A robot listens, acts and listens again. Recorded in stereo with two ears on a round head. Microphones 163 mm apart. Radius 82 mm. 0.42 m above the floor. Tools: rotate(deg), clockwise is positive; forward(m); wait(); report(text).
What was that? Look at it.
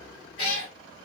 rotate(-25)
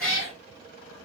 report("Found it: a cat meowing, straight ahead.")